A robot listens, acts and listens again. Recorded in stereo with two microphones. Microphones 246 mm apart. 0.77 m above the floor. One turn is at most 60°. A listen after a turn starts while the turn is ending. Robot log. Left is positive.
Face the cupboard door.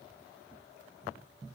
cmd idle
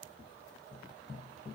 cmd idle
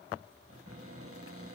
note: The cupboard door: about 65° right or 115° right.
cmd yaw -60
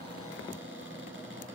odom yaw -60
note: So it is at 55° right.
cmd yaw -55
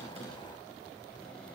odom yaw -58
cmd idle
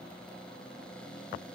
end: Found it: a cupboard door, straight ahead.